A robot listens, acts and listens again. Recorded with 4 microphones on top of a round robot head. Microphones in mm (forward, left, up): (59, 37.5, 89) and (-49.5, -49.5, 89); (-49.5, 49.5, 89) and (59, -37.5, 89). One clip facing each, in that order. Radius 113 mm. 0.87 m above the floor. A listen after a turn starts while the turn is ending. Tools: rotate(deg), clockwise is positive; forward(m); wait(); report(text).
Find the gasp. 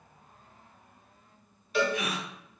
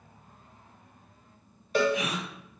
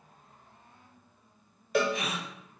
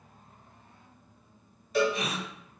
rotate(120)
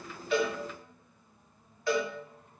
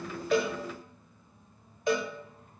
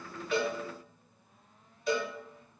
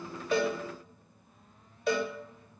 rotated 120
report("I heard a gasp from this way, but can't make it out now.")